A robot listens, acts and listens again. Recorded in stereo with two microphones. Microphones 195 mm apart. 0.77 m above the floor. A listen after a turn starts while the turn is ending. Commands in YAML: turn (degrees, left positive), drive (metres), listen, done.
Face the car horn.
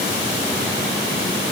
listen: true
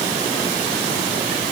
listen: true
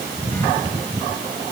done: "I can't make out a car horn."